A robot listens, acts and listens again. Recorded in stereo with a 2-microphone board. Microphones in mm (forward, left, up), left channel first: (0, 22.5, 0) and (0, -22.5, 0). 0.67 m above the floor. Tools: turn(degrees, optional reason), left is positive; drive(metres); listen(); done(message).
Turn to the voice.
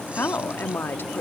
turn(degrees=55, reason="The woman speaking: about 55° left or 125° left.")
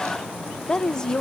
turn(degrees=20, reason="So it is at 20° left.")
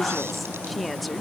done("Found it: a woman speaking, straight ahead.")